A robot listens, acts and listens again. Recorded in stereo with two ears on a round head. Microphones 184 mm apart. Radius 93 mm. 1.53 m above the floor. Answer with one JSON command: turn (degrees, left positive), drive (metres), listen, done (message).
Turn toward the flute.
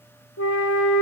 {"turn": 70}
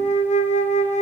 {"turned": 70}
{"turn": 35}
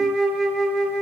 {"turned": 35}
{"done": "Facing the flute, 1 to 2 m away."}